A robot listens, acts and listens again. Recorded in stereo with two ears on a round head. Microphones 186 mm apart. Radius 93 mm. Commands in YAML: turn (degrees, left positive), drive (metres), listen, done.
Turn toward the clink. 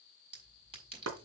turn: -30
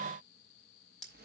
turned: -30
done: "Found it: a clink, straight ahead."